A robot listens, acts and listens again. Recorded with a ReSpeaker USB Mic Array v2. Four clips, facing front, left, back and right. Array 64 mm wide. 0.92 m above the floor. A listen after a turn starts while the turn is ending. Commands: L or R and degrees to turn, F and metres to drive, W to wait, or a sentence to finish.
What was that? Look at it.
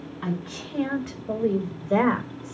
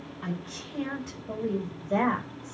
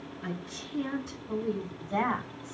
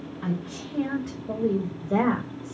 R10
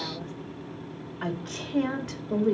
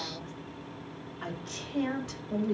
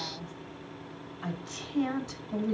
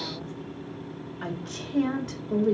R20
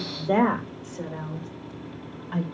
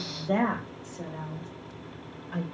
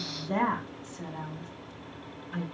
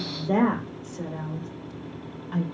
R15
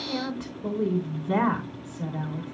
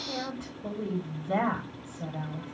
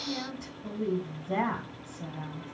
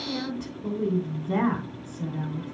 Found it: a woman speaking, straight ahead, 2 to 4 m away.